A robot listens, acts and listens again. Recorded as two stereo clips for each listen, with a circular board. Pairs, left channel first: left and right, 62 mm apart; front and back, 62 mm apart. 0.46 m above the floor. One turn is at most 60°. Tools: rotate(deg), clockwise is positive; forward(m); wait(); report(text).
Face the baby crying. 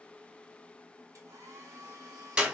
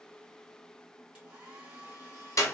wait()
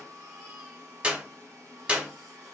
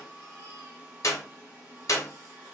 wait()
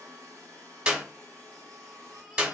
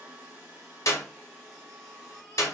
report("I can't make out a baby crying to turn to.")